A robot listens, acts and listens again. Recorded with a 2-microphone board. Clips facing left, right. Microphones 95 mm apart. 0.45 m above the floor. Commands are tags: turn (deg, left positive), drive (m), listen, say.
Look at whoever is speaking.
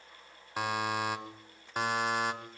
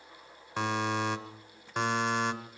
<listen/>
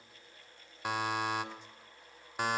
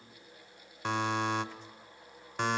<listen/>
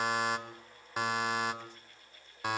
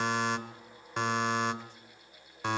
<say>I can't make out anyone speaking, only a buzzer.</say>